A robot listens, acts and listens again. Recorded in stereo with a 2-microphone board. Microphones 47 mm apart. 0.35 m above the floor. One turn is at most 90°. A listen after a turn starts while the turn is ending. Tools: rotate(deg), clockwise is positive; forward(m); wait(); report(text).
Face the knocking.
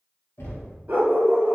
rotate(-65)
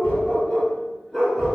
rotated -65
wait()
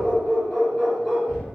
rotate(-30)
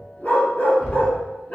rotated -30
rotate(-10)
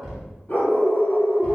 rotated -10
report("Facing the knocking.")